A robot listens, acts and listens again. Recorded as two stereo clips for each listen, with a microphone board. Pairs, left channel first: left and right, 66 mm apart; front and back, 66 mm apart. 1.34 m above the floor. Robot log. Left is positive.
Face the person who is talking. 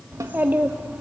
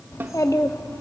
note: The child speaking: 20° right.
cmd yaw -20
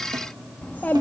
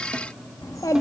note: The child speaking is now 30° left.
cmd yaw +30
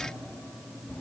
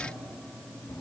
note: The child speaking is now 25° left.
cmd yaw +25
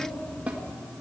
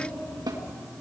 note: The child speaking is now 15° left.
cmd yaw +15
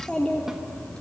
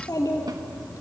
note: The child speaking is now 15° left.
cmd yaw +15
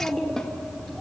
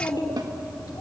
end: Facing the child speaking.